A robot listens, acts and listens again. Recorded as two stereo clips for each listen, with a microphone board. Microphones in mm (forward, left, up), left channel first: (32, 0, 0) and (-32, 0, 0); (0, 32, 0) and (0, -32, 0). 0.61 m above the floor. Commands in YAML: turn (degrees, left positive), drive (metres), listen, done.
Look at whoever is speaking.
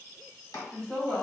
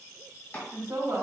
turn: -70
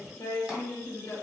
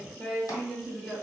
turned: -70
done: "Facing the woman speaking."